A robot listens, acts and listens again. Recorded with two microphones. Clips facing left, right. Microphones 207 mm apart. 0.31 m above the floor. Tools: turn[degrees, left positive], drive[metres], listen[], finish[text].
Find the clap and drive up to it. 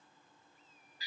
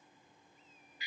Action: listen[]
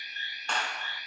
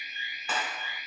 Action: turn[-30]
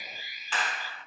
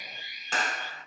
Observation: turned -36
Thought: So it is at 135° right.
Action: turn[-135]
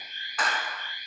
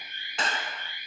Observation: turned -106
Thought: The clap is now 30° right.
Action: turn[-30]
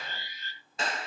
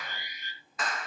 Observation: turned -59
Thought: The clap is now 30° left.
Action: turn[30]
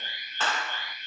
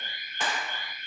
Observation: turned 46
Thought: The clap is now 15° right.
Action: turn[-15]
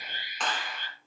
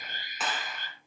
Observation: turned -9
Action: drive[1.0]
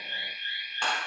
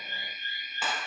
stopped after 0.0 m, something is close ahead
Action: finish[Something is in my way. I am facing the clap but have not reached it.]